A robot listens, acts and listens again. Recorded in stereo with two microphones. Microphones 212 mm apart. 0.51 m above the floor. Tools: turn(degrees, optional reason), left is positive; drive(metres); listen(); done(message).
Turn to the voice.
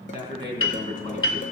turn(degrees=35, reason="The man speaking: about 35° left or 145° left.")
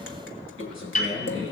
turn(degrees=105, reason="So it is at 105° left.")
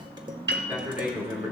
turn(degrees=-10, reason="The man speaking is now 10° right.")
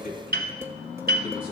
listen()
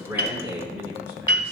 turn(degrees=-10, reason="The man speaking is now 10° right.")
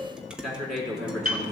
done("Found it: a man speaking, straight ahead.")